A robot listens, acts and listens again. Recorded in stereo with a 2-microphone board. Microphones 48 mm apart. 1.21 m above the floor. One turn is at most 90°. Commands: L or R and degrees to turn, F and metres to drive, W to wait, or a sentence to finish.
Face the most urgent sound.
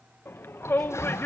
L55
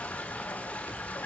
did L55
W
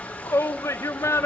L75
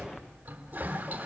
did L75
W
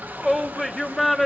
Found it: a shout, straight ahead.